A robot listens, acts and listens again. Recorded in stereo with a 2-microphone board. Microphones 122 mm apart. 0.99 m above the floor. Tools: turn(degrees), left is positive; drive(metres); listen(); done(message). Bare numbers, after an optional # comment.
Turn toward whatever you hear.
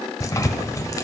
# The tearing paper: about 30° left or 150° left.
turn(30)
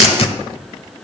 # So it is at 115° left.
turn(115)
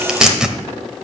done("Found it: tearing paper, straight ahead, 1 to 2 m away.")